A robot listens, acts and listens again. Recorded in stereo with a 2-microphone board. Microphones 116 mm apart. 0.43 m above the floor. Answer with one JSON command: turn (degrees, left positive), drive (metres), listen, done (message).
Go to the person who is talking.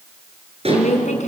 {"turn": 90}
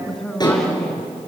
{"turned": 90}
{"drive": 1.0}
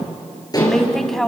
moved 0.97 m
{"drive": 1.0}
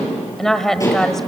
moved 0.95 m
{"drive": 1.0}
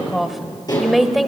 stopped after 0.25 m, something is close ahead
{"done": "Arrived at the woman speaking, straight ahead."}